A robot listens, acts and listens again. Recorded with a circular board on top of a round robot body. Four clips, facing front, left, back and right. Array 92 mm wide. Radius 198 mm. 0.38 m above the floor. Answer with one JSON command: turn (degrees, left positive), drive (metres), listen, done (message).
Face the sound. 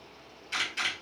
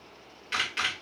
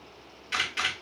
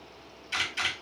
{"turn": 125}
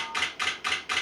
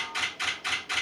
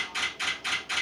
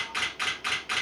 {"turn": -35}
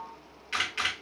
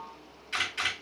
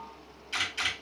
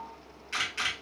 {"turn": -10}
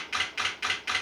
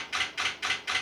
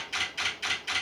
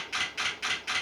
{"done": "Facing the camera shutter, 2 to 4 m away."}